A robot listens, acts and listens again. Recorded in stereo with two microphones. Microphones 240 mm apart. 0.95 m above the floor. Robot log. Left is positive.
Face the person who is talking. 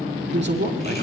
note: The man speaking: about 45° right or 135° right.
cmd yaw -45
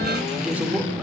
end: Facing the man speaking.